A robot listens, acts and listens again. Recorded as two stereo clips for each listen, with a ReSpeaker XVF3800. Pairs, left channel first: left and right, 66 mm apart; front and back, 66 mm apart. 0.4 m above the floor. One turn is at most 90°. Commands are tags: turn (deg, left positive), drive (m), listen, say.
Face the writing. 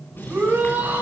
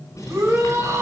<turn deg="30"/>
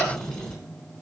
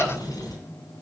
<turn deg="10"/>
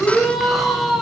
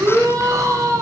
<listen/>
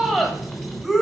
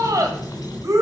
<say>Facing the writing, 2 to 4 m away.</say>